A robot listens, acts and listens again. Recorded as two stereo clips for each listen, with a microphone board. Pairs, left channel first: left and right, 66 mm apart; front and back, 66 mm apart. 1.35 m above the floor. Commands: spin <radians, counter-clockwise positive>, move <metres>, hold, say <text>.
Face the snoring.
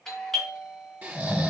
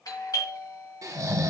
spin -2.62
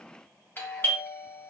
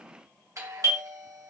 hold
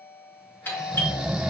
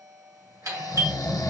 spin -0.17
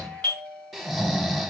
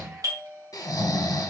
say Found it: snoring, straight ahead.